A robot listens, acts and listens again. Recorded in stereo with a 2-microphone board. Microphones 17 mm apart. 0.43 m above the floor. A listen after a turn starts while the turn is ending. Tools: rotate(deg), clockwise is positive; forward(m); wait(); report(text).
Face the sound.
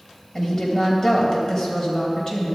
rotate(-30)
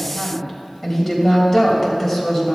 report("Facing the woman speaking, 2 to 4 m away.")